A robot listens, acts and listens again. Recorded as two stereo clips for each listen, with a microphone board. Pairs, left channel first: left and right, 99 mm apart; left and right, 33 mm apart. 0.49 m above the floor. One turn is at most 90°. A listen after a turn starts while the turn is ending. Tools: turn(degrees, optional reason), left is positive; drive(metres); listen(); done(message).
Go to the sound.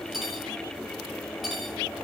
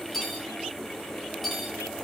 turn(degrees=30)
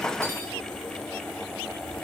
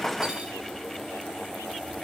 turn(degrees=-35, reason="So it is at 35° right.")
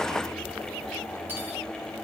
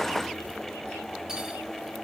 listen()
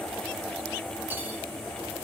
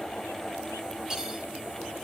listen()
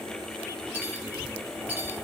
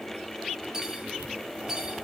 turn(degrees=-20, reason="The cutlery clinking is now 20° right.")
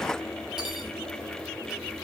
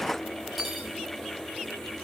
drive(metres=1.0)
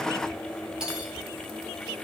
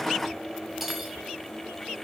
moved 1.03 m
drive(metres=1.0)
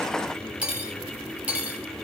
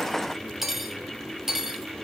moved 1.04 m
turn(degrees=-15, reason="The cutlery clinking is now 15° right.")
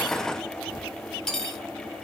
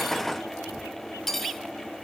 drive(metres=1.0)
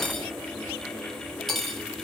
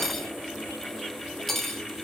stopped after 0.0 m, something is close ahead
done("Arrived at the cutlery clinking, straight ahead.")